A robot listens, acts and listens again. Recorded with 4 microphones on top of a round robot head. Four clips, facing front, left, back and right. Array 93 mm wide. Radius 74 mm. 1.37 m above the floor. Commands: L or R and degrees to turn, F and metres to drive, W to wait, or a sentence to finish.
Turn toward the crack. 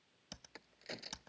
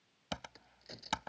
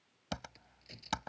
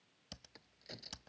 Found it: a crack, straight ahead.